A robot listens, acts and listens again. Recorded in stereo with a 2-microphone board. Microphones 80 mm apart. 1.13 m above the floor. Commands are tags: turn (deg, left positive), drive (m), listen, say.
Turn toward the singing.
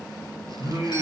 <turn deg="-45"/>
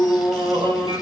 <turn deg="-100"/>
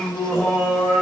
<say>Found it: singing, straight ahead.</say>